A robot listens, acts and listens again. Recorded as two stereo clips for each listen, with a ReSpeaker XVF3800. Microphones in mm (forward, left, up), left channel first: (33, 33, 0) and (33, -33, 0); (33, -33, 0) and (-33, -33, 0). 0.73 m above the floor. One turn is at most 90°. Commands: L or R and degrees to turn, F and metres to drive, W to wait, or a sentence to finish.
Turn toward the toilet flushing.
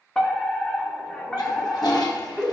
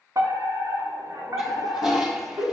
L90
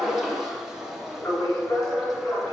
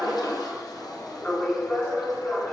L10
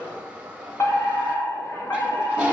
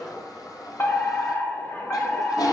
R15
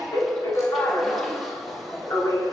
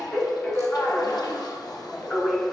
W
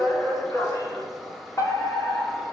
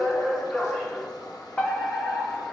Found it: a toilet flushing, straight ahead, 2 to 4 m away.